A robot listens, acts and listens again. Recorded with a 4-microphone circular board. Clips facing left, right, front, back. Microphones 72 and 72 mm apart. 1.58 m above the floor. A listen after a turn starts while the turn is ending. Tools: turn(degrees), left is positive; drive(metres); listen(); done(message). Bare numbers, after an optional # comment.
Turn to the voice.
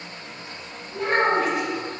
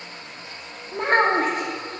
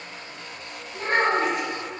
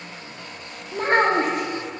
# The child speaking: 135° right.
turn(-135)
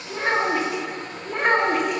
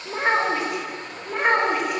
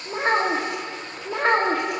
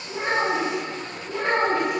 done("Facing the child speaking, 1 to 2 m away.")